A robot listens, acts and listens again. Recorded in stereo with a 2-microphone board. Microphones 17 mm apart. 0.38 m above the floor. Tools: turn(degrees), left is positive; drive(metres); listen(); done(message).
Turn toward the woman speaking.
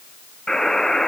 listen()
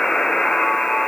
listen()
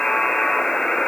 done("I can't make out a woman speaking to turn to.")